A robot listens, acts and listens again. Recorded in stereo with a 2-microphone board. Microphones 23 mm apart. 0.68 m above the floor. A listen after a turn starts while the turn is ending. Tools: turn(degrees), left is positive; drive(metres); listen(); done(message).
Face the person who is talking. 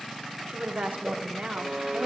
turn(degrees=-65)
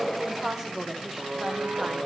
turn(degrees=-15)
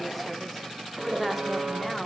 done("Facing the woman speaking, 1 to 2 m away.")